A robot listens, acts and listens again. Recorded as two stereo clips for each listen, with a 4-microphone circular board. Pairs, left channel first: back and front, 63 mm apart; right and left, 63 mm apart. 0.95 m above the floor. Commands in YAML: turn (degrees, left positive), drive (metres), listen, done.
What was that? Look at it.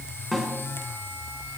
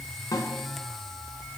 turn: -90
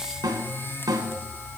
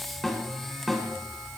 done: "Facing the snare drum."